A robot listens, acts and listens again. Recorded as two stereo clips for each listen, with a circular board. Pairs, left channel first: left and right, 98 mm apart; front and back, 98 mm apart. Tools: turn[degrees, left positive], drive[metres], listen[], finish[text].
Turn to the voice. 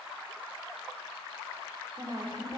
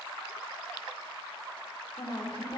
Thought: The woman speaking: 45° right.
Action: turn[-45]
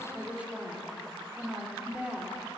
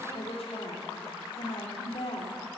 Thought: The woman speaking is now 10° right.
Action: turn[-10]
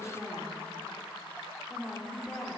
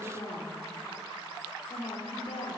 Action: finish[Facing the woman speaking, 2 to 4 m away.]